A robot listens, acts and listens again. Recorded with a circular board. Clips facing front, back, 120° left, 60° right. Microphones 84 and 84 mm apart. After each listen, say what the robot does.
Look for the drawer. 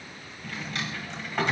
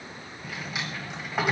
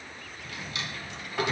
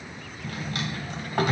Turn 100° right.
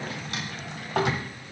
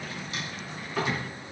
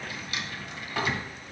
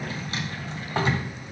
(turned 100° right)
Facing the drawer.